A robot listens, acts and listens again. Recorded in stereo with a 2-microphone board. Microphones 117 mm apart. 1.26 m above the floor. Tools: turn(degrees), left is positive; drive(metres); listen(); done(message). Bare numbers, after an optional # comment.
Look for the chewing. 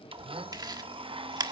# The chewing: about 35° right or 145° right.
turn(-35)
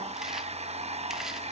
listen()
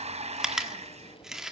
done("Found it: chewing, straight ahead.")